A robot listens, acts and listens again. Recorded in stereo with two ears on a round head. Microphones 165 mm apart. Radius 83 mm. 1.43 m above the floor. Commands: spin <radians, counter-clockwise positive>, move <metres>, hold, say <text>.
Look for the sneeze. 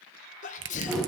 spin 0.70
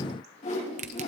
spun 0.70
hold
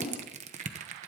say I heard a sneeze, but can't make it out now. It was about straight ahead or 100° left.